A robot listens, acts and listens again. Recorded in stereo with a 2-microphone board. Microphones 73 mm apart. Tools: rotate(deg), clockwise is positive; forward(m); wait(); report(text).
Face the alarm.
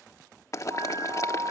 rotate(90)
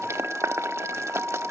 rotate(20)
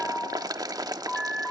report("Found it: an alarm, straight ahead.")